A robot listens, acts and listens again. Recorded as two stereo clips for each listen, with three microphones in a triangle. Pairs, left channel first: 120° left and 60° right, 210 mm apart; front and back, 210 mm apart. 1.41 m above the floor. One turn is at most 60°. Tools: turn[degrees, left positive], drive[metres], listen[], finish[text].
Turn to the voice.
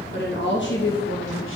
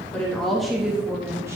Thought: The woman speaking: 95° left.
Action: turn[60]
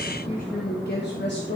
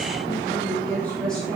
Thought: The woman speaking is now 90° left.
Action: turn[60]
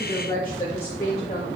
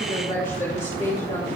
Thought: The woman speaking is now 60° left.
Action: turn[60]
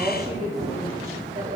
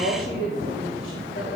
Action: finish[Facing the woman speaking.]